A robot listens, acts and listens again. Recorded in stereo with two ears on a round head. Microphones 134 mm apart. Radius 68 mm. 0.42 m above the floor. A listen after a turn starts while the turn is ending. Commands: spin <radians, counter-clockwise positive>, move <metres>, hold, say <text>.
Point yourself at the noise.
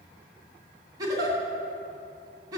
spin -0.44
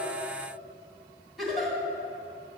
say Found it: a giggle, straight ahead, 2 to 4 m away.